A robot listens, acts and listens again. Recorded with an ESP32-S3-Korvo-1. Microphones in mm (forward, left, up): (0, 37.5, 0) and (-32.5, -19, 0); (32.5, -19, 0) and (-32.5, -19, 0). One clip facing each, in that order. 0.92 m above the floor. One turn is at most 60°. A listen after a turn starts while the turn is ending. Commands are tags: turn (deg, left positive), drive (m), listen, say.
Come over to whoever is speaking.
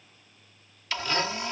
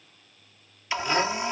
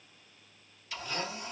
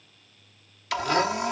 <listen/>
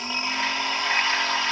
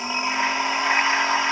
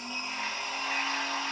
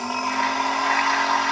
<listen/>
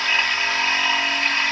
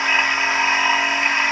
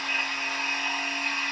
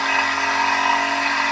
<say>I can't make out anyone speaking, only a blender.</say>